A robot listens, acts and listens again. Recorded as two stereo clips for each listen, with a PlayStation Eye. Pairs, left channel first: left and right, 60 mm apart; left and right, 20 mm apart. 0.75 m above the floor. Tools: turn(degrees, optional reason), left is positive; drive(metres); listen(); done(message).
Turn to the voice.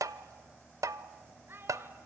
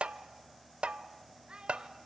turn(degrees=-40, reason="The child speaking: about 40° right or 140° right.")
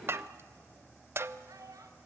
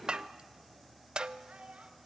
turn(degrees=-105, reason="So it is at 105° right.")
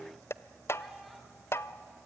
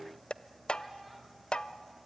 listen()
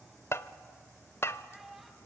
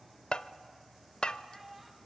done("Found it: a child speaking, straight ahead.")